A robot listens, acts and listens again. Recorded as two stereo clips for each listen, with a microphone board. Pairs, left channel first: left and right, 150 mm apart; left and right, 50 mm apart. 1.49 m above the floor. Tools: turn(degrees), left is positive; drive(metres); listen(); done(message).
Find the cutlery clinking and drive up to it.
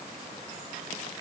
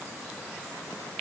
listen()
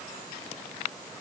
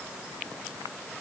listen()
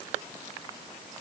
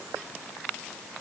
done("I can't make out cutlery clinking.")